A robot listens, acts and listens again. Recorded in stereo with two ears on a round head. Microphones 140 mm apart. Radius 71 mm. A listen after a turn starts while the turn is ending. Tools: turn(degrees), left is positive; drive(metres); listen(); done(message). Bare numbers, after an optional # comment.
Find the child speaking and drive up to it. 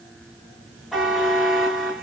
listen()
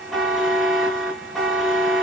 listen()
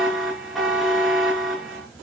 done("I can't make out a child speaking to turn to.")